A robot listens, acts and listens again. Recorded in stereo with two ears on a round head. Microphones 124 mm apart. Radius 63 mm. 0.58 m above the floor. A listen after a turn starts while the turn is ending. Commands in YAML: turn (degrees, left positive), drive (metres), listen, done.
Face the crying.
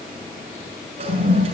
listen: true
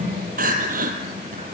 turn: -65
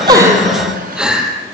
done: "Facing the crying, 2 to 4 m away."